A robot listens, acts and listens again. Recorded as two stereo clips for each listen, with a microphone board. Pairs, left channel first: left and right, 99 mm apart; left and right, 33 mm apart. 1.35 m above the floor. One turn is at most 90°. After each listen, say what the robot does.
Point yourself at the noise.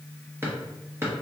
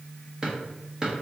Turn 20° right.
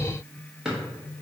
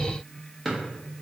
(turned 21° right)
Facing the drawer.